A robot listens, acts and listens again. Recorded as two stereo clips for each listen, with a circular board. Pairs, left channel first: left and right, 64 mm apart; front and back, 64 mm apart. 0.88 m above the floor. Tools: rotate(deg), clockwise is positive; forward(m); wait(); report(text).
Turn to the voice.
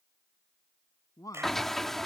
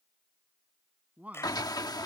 rotate(-115)
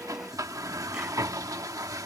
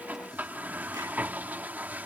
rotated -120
wait()
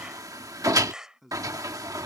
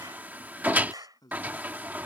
report("Facing the man speaking.")